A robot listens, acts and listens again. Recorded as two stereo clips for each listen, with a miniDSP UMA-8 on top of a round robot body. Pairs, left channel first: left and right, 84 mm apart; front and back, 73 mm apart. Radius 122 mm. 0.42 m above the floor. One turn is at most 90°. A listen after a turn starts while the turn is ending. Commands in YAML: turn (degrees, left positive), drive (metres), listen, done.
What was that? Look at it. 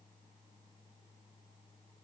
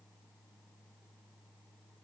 listen: true
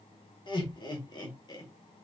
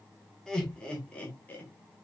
turn: 65
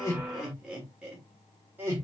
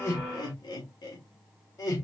turn: -25
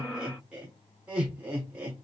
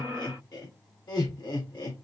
turn: -15
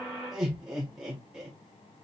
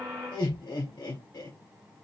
done: "Facing the laughter."